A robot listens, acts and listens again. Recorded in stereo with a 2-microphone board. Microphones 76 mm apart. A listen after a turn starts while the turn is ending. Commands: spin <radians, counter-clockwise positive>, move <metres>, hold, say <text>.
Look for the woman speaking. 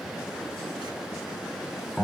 hold
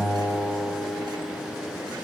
hold
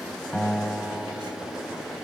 say I can't make out a woman speaking, only a guitar.